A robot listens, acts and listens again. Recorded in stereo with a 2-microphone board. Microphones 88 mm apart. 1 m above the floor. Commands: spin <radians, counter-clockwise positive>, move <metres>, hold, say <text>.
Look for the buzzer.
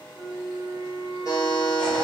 spin 0.70
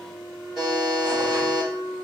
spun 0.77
say Found it: a buzzer, straight ahead, 1 to 2 m away.